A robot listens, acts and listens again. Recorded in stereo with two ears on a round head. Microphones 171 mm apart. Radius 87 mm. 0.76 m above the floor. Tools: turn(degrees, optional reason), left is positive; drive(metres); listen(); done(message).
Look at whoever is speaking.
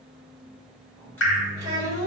turn(degrees=-20, reason="The child speaking: about 20° right or 160° right.")
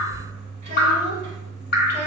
turn(degrees=-140, reason="So it is at 140° right.")
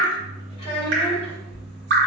turn(degrees=25, reason="The child speaking is now 25° left.")
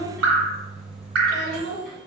done("Facing the child speaking, 1 to 2 m away.")